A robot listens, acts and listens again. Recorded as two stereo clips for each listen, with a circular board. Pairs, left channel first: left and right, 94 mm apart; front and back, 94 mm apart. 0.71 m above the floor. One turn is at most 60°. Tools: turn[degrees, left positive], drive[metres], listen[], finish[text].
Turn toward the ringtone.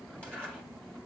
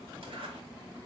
Action: listen[]
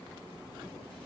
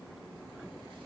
Action: listen[]
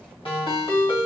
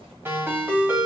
Thought: The ringtone: 110° left.
Action: turn[60]
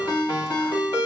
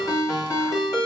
Thought: The ringtone is now 55° left.
Action: turn[55]
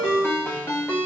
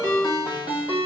Thought: The ringtone is now 25° left.
Action: turn[25]
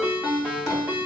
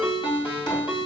Thought: The ringtone is now 20° right.
Action: turn[-20]
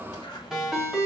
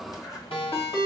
Action: finish[Facing the ringtone, 2 to 4 m away.]